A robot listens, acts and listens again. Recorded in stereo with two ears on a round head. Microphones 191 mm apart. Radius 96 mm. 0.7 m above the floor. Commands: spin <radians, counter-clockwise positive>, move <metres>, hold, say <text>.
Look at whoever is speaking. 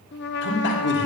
spin 0.96
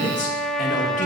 spin 0.79
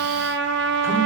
hold
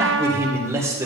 spin -0.26
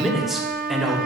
say Found it: a man speaking, straight ahead, 2 to 4 m away.